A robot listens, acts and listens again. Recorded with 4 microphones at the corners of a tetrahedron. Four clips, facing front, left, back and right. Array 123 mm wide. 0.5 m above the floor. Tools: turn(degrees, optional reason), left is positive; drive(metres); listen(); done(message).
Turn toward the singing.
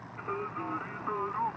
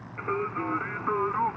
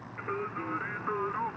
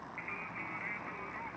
turn(degrees=85, reason="The singing: 85° left.")
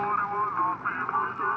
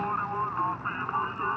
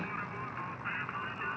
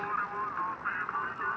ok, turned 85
turn(degrees=30, reason="The singing is now 30° left.")
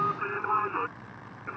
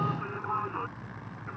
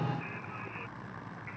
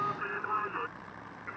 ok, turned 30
turn(degrees=15, reason="The singing is now 15° left.")
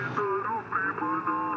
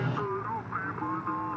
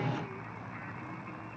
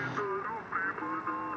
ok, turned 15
done("Facing the singing.")